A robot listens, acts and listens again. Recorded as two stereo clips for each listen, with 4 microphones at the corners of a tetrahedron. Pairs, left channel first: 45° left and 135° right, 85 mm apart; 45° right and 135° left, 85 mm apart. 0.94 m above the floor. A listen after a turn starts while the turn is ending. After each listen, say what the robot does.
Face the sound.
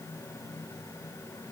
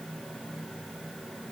Keep listening.
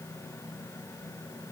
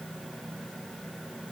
Keep listening.
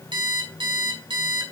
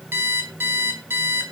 Turn 160° right.
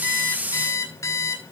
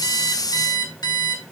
Facing the alarm clock.